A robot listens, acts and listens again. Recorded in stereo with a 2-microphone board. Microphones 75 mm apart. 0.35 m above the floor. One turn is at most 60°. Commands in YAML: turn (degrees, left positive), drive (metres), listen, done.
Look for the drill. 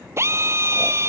turn: -35
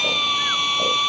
done: "Facing the drill."